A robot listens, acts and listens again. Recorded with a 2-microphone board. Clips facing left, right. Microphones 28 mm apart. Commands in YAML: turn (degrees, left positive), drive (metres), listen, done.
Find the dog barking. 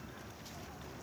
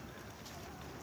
listen: true
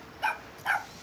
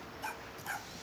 turn: 50
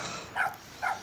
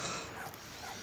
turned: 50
turn: 75
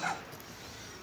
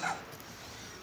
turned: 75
done: "Facing the dog barking."